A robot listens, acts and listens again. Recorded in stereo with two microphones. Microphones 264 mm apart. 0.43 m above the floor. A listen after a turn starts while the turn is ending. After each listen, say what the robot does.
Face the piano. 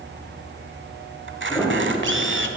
Turn 30° right.
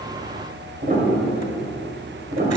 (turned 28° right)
Turn 140° right.
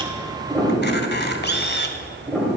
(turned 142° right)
Facing the piano.